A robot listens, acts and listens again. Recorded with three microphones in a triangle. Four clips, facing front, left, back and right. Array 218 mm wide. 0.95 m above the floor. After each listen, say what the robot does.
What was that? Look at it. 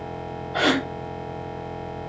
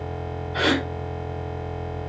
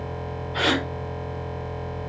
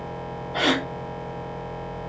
Turn 25° right.
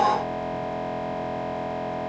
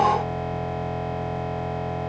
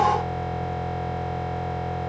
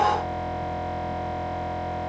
I heard a gasp from this way, but can't make it out now.